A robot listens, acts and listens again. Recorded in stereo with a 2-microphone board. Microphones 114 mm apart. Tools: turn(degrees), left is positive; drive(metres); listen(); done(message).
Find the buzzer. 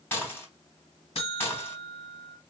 turn(degrees=70)
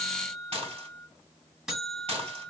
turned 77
done("Facing the buzzer, 1 to 2 m away.")